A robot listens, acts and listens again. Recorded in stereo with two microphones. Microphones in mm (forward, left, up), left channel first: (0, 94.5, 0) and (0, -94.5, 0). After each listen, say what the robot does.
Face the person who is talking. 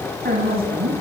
Turn 55° right.
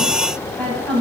Facing the woman speaking, over 4 m away.